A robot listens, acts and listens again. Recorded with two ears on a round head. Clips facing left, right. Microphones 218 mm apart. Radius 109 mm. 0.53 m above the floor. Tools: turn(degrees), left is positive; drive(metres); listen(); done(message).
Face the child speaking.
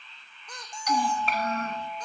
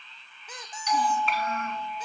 turn(degrees=35)
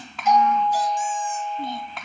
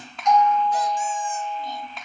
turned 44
turn(degrees=130)
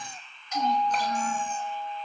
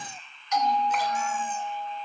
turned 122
turn(degrees=10)
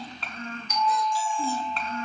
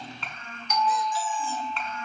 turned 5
turn(degrees=35)
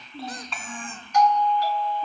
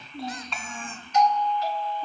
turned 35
done("Facing the child speaking.")